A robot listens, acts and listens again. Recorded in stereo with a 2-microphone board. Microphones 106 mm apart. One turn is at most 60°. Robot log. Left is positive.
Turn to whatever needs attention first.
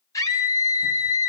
note: The scream: about 35° left or 145° left.
cmd yaw +35
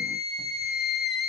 end: Facing the scream, over 4 m away.